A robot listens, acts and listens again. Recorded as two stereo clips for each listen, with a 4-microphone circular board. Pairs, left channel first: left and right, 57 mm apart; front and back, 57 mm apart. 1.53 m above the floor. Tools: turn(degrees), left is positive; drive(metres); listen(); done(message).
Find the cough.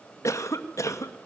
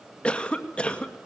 turn(degrees=70)
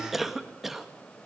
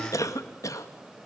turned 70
done("Facing the cough, 2 to 4 m away.")